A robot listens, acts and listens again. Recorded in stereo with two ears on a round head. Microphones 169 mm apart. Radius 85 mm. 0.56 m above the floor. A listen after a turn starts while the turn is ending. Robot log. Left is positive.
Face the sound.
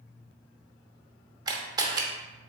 note: The camera shutter: about 20° right or 160° right.
cmd yaw -20
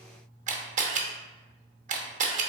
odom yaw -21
note: So it is at 135° right.
cmd yaw -135
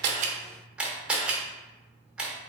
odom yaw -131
end: Facing the camera shutter.